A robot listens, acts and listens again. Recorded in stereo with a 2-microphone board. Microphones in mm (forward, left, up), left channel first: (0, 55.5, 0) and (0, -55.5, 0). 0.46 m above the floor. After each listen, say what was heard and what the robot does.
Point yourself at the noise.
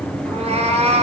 Turn 90° right.
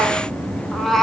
Facing the cat meowing, 2 to 4 m away.